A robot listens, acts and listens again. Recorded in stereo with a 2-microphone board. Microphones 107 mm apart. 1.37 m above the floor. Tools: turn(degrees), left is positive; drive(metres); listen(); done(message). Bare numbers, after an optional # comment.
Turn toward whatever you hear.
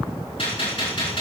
# The gunshot: about 60° left or 120° left.
turn(60)
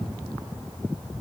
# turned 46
listen()
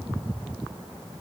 done("I heard a gunshot, but can't make it out now. It was about 15° left or 75° left.")